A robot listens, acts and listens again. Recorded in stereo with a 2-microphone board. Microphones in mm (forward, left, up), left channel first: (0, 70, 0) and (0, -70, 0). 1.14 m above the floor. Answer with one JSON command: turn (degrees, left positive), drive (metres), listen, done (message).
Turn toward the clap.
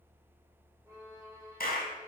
{"turn": 90}
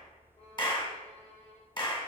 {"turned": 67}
{"turn": 30}
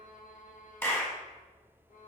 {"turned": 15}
{"turn": 15}
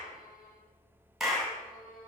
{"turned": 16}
{"done": "Facing the clap."}